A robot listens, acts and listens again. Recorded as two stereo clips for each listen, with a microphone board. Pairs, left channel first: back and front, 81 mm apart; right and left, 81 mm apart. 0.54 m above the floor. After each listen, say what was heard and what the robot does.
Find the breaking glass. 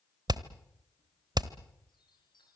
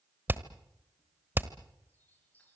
Keep listening.
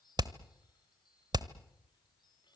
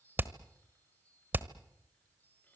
Keep listening.
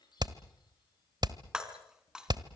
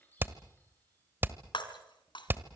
The breaking glass: 80° right. Turn 80° right.
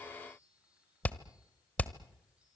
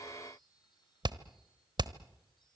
Facing where the breaking glass came from. I can't hear it now.